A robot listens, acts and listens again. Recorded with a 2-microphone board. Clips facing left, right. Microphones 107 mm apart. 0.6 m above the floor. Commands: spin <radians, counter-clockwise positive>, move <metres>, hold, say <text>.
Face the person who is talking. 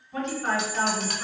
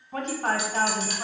spin -0.87
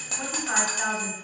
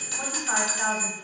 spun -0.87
spin -0.17
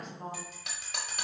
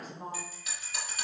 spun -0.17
say Found it: a woman speaking, straight ahead, 1 to 2 m away.